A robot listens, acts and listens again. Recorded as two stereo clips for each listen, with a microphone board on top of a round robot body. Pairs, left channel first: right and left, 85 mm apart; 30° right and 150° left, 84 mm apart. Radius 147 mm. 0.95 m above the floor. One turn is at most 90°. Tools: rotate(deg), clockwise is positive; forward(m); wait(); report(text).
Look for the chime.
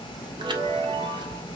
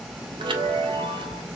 rotate(-90)
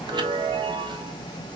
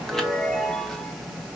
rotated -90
rotate(-55)
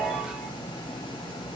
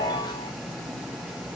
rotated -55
rotate(-10)
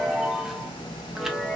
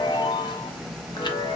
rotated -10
report("Facing the chime.")